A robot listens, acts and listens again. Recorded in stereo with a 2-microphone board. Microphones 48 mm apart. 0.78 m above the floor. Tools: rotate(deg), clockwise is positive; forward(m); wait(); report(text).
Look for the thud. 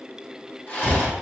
rotate(-90)
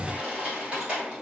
report("I heard a thud from this way, but can't make it out now.")